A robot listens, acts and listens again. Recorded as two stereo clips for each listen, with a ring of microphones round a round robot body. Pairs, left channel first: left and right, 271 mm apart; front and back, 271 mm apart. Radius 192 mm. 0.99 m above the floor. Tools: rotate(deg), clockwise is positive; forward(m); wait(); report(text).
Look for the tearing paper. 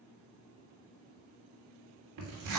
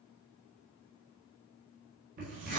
rotate(110)
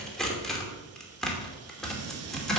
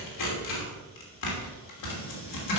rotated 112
report("Facing the tearing paper.")